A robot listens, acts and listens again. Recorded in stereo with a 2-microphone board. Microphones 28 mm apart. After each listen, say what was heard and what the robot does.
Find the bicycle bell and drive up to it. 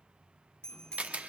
The bicycle bell: about 25° left or 155° left. Turn 25° left.
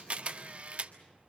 Keep listening.
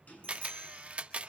Keep listening.
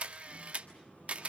I heard a bicycle bell, but can't make it out now. It was about straight ahead or 130° left. I did not reach it.